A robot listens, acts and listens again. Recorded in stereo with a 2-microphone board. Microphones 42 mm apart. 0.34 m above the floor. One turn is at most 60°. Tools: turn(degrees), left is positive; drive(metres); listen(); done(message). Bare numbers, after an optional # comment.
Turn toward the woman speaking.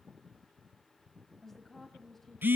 turn(30)
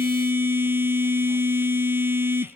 listen()
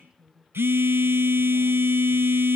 # So it is at 15° right.
turn(-15)
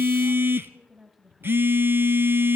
done("Facing the woman speaking.")